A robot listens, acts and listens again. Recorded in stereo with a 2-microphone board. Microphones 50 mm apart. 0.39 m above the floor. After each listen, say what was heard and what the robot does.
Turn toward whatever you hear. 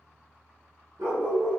Turn 90° right.
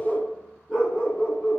So it is at 20° left. Turn 20° left.
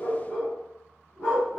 The dog barking is now 10° left. Turn 10° left.
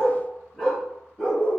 The dog barking is now 10° left. Turn 10° left.
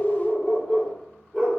Found it: a dog barking, straight ahead, 2 to 4 m away.